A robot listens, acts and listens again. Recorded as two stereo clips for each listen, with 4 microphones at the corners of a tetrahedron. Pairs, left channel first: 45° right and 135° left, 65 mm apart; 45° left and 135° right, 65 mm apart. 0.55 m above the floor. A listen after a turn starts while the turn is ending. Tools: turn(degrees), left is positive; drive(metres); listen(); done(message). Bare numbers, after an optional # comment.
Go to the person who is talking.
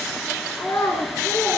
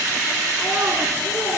# The child speaking: 85° right.
turn(-85)
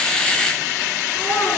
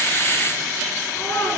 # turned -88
drive(1.0)
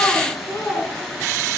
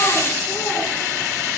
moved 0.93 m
listen()
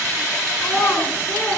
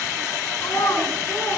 drive(1.0)
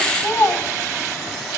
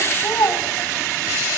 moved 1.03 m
drive(1.0)
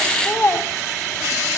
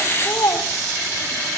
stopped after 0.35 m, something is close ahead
# The child speaking is now 10° left.
turn(10)
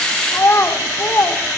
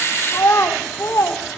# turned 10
done("I am next to the child speaking.")